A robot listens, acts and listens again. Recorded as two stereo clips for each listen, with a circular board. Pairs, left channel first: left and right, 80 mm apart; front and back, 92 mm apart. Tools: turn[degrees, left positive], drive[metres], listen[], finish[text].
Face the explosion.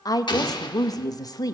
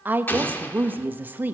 Thought: The explosion: 70° left.
Action: turn[70]
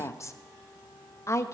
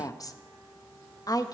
Action: finish[I heard an explosion from this way, but can't make it out now.]